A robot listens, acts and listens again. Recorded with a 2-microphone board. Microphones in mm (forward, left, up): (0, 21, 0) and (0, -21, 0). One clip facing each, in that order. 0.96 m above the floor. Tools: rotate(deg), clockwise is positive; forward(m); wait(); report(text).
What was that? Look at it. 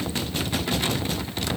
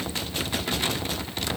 wait()
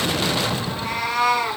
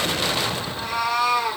rotate(-65)
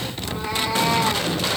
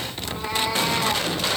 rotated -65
report("Found it: a cat meowing, straight ahead, over 4 m away.")